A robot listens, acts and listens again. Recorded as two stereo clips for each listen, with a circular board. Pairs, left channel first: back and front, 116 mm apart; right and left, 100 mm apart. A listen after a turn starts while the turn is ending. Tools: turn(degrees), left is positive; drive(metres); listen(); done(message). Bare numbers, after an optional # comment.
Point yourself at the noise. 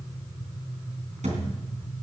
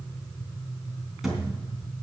done("Found it: a thud, straight ahead.")